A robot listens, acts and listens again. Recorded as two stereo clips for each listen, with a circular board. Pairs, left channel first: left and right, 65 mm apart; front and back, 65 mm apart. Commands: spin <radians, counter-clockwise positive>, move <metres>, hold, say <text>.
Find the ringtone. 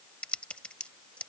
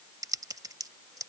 hold
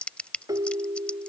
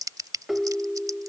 spin -1.66
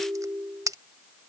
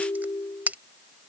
spin -0.26
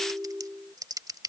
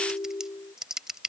say Facing the ringtone.